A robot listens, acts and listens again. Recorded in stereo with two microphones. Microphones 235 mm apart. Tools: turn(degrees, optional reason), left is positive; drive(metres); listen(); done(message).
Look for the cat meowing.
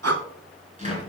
listen()
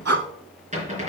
listen()
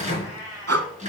turn(degrees=-30)
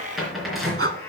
turn(degrees=10, reason="So it is at 10° left.")
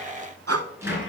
listen()
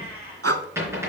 turn(degrees=-10, reason="The cat meowing is now 10° right.")
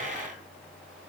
listen()
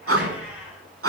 listen()
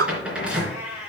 done("Facing the cat meowing, over 4 m away.")